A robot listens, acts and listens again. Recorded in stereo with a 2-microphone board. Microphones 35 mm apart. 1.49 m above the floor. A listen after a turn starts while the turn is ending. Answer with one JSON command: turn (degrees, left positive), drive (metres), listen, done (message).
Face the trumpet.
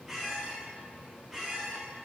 {"listen": true}
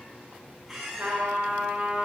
{"turn": -65}
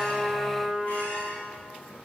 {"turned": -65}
{"turn": -45}
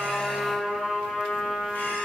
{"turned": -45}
{"done": "Facing the trumpet."}